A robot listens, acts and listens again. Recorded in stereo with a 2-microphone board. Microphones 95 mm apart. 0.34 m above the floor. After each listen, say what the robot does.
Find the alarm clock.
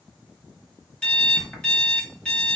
Turn 30° left.
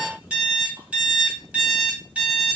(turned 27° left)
Turn 15° right.
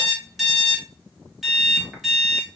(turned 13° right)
Facing the alarm clock, 1 to 2 m away.